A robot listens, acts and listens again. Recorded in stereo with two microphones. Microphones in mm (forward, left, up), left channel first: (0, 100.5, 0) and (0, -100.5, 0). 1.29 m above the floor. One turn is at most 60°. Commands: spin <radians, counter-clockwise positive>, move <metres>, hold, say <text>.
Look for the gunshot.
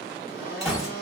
spin 0.52
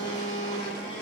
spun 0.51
hold
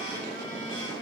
say I heard a gunshot, but can't make it out now. It was about 30° right or 155° left.